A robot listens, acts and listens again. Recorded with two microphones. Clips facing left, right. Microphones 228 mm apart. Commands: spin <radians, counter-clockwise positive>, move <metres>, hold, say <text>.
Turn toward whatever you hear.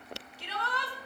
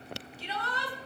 spin 1.13
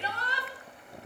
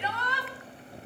spin 0.70
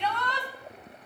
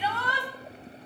say Facing the shout, 2 to 4 m away.